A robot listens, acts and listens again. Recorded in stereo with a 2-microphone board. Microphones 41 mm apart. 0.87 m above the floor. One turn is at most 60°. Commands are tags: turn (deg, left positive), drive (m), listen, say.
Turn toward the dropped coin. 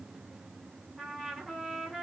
<listen/>
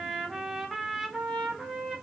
<listen/>
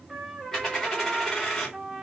<turn deg="30"/>
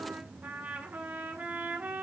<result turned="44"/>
<listen/>
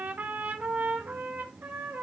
<say>I heard a dropped coin, but can't make it out now. It was about 30° right or 125° left.</say>